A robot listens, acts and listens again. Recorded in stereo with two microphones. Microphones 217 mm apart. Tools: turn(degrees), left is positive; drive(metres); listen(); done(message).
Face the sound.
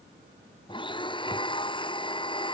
turn(degrees=20)
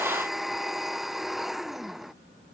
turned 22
done("Facing the blender.")